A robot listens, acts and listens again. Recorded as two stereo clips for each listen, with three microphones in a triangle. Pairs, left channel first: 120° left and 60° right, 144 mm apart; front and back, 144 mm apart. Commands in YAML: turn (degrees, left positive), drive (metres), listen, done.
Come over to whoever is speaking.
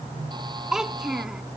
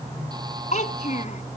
turn: 25
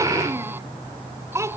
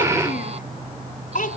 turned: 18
turn: 10
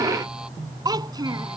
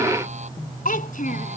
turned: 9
drive: 1.0
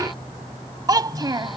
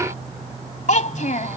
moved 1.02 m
drive: 1.0
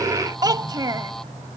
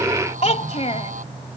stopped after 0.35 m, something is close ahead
done: "Arrived at the child speaking, straight ahead."